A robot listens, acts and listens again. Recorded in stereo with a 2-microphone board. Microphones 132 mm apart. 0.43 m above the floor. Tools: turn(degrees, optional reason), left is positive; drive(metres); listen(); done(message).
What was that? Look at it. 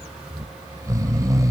turn(degrees=-25, reason="The snoring: about 25° right or 155° right.")
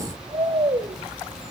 turn(degrees=-130, reason="So it is at 130° right.")
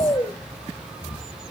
turn(degrees=35, reason="The snoring is now 35° left.")
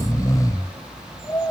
turn(degrees=25, reason="The snoring is now 25° left.")
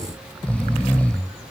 turn(degrees=10, reason="The snoring is now 10° left.")
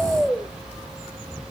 done("Found it: snoring, straight ahead.")